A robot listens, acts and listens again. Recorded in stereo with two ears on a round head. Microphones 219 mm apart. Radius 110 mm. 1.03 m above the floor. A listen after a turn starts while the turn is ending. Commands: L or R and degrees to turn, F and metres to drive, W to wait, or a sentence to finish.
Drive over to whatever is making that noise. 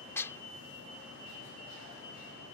L30
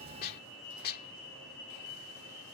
L140
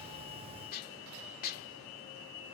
L40
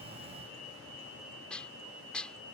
F1.0
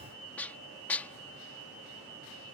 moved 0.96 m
F1.0
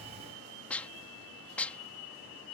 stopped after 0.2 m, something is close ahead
Arrived at the dishes clattering, straight ahead.